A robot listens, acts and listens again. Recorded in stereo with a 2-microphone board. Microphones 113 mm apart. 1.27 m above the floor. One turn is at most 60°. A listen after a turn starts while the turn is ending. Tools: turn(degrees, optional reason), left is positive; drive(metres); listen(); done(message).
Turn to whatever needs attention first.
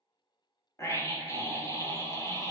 turn(degrees=25, reason="The scream: about 25° left or 155° left.")
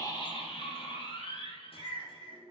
turn(degrees=60, reason="So it is at 125° left.")
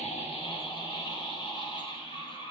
turn(degrees=45, reason="The scream is now 45° left.")
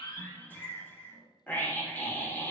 turn(degrees=15, reason="The scream is now 15° left.")
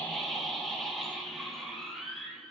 done("Found it: a scream, straight ahead, 2 to 4 m away.")